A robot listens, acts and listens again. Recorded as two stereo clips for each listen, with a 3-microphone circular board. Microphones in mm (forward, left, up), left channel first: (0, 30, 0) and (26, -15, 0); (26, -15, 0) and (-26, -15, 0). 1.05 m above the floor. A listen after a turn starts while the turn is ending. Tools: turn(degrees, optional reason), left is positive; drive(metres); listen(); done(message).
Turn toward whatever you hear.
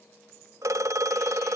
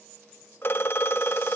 turn(degrees=-45, reason="The phone ringing: 45° right.")
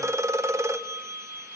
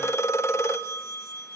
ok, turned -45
turn(degrees=-30, reason="The phone ringing is now 30° right.")
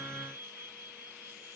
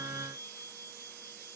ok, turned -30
listen()
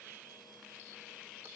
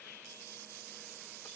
listen()
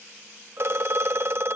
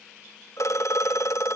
turn(degrees=-20, reason="The phone ringing is now 20° right.")
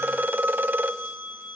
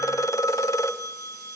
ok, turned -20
done("Facing the phone ringing.")